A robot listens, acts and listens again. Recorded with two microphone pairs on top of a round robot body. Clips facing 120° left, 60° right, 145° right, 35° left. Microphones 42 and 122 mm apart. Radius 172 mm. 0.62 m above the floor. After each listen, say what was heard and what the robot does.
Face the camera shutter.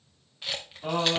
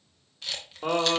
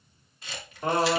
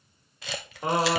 The camera shutter: 45° left. Turn 45° left.
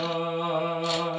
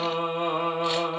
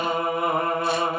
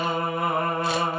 Keep listening.
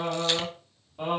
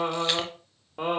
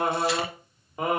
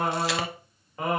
Keep listening.
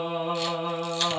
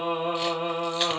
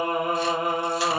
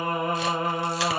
Facing where the camera shutter came from. I can't hear it now.